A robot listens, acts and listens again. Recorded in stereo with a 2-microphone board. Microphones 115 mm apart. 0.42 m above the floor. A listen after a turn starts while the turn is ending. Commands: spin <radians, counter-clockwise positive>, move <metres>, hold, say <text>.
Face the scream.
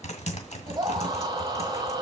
spin -0.70
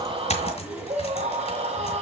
spin -1.66
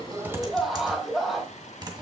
say Found it: a scream, straight ahead, 2 to 4 m away.